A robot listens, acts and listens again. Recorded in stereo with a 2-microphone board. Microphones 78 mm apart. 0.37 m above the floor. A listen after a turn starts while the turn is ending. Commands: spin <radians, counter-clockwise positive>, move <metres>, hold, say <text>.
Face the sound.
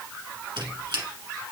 spin -1.57
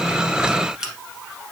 say Found it: a squeak, straight ahead, 1 to 2 m away.